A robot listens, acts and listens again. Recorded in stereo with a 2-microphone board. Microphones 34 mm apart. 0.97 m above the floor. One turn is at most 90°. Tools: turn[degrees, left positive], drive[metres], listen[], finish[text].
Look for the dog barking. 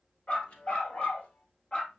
Thought: The dog barking: about 30° left or 150° left.
Action: turn[30]
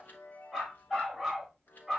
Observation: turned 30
Action: finish[Facing the dog barking, 2 to 4 m away.]